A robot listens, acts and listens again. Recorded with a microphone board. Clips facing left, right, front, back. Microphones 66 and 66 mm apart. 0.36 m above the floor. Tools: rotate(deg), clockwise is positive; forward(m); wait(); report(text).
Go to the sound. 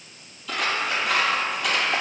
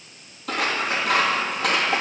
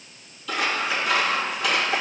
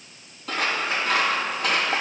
rotate(130)
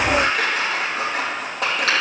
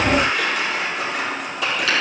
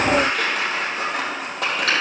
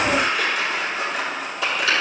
rotate(-45)
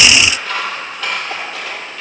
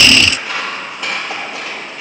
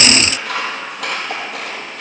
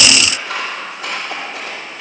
rotate(15)
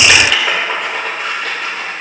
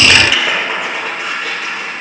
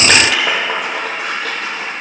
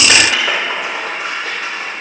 forward(1.0)
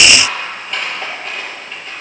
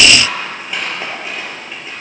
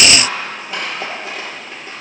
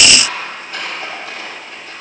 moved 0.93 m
forward(1.0)
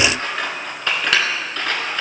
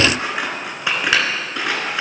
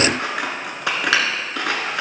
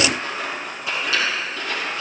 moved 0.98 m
rotate(10)
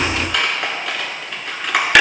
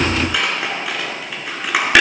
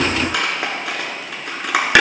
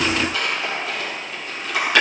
forward(1.0)
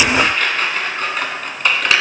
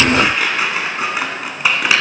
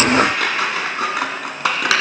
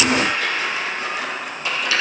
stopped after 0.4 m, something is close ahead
report("I am next to the scissors.")